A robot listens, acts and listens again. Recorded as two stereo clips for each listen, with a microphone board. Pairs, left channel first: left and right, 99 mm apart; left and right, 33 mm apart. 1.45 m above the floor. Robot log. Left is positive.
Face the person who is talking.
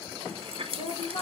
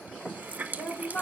cmd yaw +90
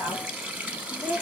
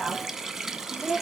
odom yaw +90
note: So it is at 20° right.
cmd yaw -20
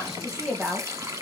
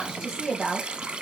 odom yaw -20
note: The woman speaking is now 10° right.
cmd yaw -10
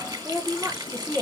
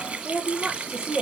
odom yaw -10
note: The woman speaking is now 15° right.
cmd yaw -15
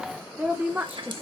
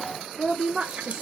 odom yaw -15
note: The woman speaking is now 25° right.
cmd yaw -25
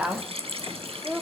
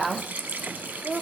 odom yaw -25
note: The woman speaking is now 10° right.
cmd yaw -10
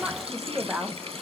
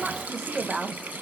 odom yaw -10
end: Facing the woman speaking.